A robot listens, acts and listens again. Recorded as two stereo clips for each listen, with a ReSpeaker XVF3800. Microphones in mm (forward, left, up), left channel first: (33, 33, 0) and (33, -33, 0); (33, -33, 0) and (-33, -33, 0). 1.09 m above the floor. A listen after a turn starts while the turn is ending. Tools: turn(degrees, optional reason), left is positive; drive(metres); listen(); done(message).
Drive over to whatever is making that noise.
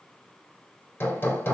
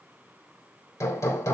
turn(degrees=40, reason="The hammering: 40° left.")
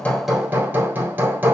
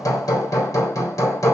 turn(degrees=-30, reason="The hammering is now 30° right.")
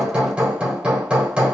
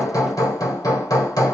turn(degrees=-15, reason="The hammering is now 15° right.")
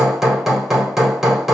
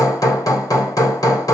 drive(metres=1.0)
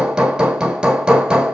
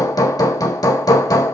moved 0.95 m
turn(degrees=-15, reason="The hammering is now 15° right.")
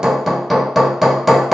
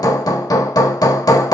drive(metres=1.0)
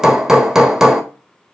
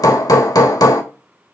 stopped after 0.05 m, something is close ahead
turn(degrees=-10, reason="The hammering is now 10° right.")
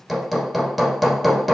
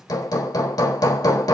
done("Arrived at the hammering, straight ahead.")